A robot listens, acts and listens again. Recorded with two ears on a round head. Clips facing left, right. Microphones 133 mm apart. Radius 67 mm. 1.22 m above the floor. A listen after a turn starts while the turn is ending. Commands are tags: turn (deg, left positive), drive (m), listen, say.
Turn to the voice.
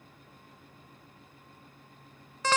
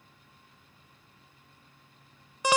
<listen/>
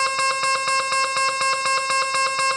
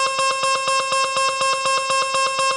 <listen/>
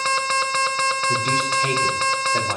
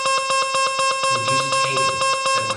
<turn deg="50"/>
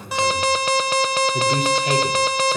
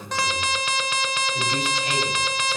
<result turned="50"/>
<turn deg="80"/>
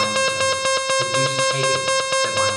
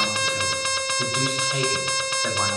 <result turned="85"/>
<listen/>
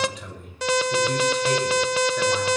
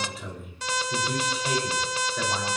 <say>Facing the man speaking, over 4 m away.</say>